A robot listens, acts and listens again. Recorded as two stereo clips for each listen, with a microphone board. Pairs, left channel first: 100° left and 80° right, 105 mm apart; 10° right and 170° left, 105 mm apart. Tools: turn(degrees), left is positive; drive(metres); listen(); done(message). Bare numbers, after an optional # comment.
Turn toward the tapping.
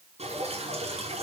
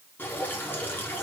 listen()
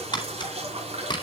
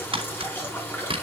# The tapping: 145° left.
turn(145)
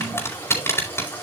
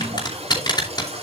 # The tapping is now 35° left.
turn(35)
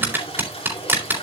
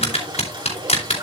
# The tapping is now 10° right.
turn(-10)
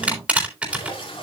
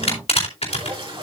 done("Facing the tapping.")